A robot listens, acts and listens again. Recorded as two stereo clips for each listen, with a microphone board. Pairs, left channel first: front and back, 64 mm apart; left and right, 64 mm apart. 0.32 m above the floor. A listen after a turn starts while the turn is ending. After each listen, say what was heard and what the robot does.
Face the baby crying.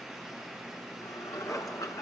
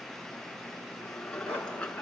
Keep listening.
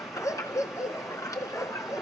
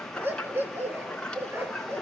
Keep listening.
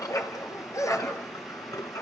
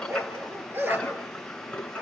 I can't make out a baby crying, only a dog barking and dishes clattering.